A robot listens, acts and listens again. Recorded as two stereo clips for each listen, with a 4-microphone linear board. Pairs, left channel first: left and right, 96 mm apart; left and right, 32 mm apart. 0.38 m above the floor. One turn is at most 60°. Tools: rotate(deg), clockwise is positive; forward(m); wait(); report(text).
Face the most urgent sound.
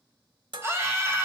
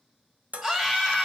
rotate(25)
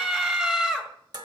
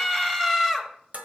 rotate(10)
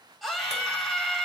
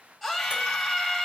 report("Facing the scream.")